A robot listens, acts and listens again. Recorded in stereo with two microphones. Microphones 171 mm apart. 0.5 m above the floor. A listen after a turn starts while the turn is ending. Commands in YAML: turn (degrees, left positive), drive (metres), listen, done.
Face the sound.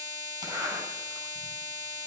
turn: -25
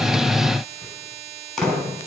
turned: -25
done: "Found it: a zipper, straight ahead, over 4 m away."